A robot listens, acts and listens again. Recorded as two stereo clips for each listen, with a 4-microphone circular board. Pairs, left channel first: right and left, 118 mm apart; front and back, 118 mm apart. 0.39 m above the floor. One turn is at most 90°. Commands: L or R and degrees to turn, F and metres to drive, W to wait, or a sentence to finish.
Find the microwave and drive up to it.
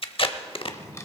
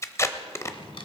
W
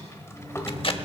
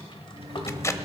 R90
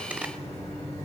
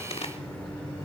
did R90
R80
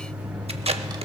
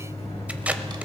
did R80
L10
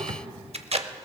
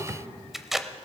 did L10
W
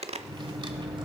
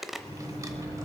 F1.0
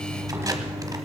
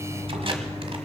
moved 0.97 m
F1.0
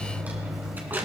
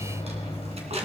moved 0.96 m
F1.0
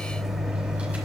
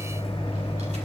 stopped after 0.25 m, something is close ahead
Arrived at the microwave, straight ahead.